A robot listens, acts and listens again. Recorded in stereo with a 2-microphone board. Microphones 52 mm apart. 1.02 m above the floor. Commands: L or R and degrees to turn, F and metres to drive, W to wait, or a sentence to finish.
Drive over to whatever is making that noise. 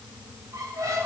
R90
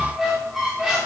F1.0
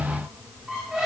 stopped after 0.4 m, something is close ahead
Blocked. The squeak is further on, straight ahead.